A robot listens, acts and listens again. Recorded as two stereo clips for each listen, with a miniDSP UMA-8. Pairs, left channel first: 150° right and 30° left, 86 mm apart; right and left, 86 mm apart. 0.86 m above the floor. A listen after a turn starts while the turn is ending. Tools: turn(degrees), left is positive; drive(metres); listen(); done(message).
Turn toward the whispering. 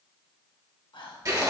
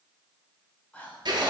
turn(degrees=-165)
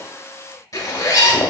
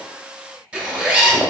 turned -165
listen()
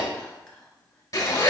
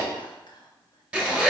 turn(degrees=-70)
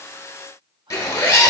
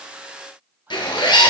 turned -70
turn(degrees=25)
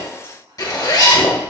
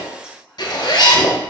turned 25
turn(degrees=10)
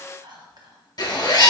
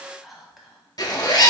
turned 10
done("Found it: whispering, straight ahead, under 1 m away.")